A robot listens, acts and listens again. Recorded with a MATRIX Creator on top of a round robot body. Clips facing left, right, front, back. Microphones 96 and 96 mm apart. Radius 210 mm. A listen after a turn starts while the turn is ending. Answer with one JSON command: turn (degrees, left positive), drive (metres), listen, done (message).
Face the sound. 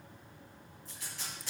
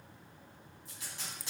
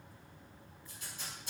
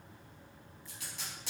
{"turn": -165}
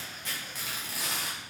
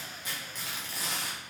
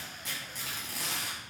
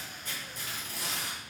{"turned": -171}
{"done": "Found it: tape being pulled, straight ahead, under 1 m away."}